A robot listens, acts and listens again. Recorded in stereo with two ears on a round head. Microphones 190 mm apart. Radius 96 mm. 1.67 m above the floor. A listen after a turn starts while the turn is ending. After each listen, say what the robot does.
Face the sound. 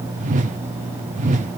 Turn 35° right.
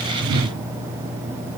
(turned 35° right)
Turn 105° right.
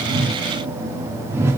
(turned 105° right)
Turn 15° right.
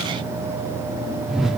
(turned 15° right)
Found it: a whoosh, straight ahead, under 1 m away.